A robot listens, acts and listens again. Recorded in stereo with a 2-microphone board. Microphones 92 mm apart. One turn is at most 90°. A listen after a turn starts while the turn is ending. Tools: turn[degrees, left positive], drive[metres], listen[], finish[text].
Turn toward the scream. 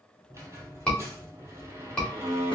Action: turn[30]
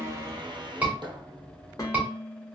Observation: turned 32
Thought: So it is at 20° right.
Action: turn[-20]
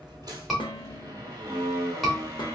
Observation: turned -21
Action: finish[Facing the scream, 1 to 2 m away.]